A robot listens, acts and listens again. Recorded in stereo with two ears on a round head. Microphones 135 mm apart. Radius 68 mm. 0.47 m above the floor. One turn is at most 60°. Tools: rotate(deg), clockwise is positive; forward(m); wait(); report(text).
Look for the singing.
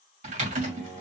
rotate(30)
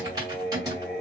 rotate(-10)
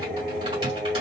rotate(10)
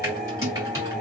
report("Facing the singing.")